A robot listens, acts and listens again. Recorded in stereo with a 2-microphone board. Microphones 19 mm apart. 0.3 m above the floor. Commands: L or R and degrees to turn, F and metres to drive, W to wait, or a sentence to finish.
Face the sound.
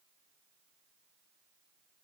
W
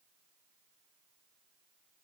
W
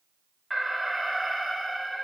R30
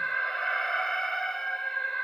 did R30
L25
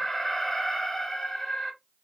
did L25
L15
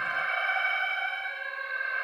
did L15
Facing the alarm, 1 to 2 m away.